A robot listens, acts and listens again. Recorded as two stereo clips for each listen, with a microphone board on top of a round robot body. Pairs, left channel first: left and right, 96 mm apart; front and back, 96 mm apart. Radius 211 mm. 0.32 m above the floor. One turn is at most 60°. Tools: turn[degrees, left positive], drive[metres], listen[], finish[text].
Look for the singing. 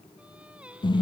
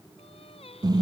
Thought: The singing: 15° right.
Action: turn[-15]
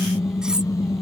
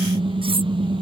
Action: listen[]
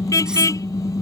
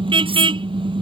Action: listen[]
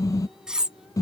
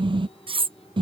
Action: finish[Facing where the singing came from. I can't hear it now.]